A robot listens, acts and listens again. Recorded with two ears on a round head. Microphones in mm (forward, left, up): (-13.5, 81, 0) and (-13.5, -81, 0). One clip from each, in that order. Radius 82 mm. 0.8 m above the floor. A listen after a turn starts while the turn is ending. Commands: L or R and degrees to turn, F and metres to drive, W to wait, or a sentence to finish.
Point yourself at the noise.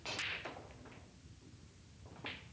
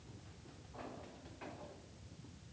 W
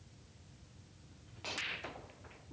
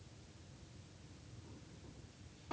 W
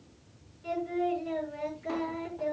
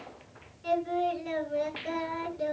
R30
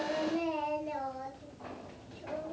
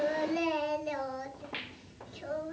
R120
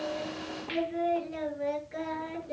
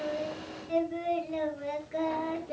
Found it: singing, straight ahead.